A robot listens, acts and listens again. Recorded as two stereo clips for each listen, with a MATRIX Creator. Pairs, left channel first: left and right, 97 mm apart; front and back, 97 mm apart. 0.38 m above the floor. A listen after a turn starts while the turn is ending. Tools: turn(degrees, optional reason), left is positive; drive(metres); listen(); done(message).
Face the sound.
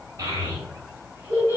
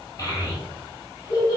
turn(degrees=-25, reason="The child speaking: 25° right.")
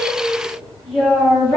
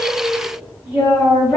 turn(degrees=15, reason="The child speaking is now 15° left.")
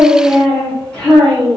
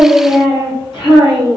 turn(degrees=15, reason="The child speaking is now 15° left.")
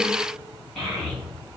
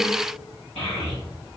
turn(degrees=10, reason="The child speaking is now 10° left.")
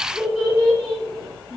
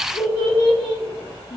done("Found it: a child speaking, straight ahead.")